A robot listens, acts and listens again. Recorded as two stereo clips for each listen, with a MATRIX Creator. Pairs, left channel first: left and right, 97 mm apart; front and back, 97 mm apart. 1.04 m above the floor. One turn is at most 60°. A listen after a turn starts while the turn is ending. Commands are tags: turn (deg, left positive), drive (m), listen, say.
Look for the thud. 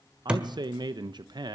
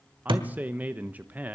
<turn deg="-60"/>
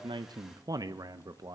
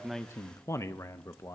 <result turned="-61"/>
<turn deg="-60"/>
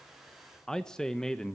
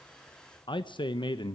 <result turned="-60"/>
<turn deg="-45"/>
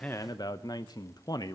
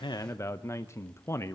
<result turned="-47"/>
<say>I heard a thud from this way, but can't make it out now.</say>